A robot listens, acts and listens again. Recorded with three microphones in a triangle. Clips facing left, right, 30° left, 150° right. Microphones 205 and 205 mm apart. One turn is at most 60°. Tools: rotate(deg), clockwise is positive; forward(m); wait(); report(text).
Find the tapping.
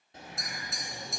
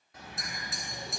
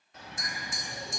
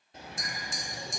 report("Found it: tapping, straight ahead, 2 to 4 m away.")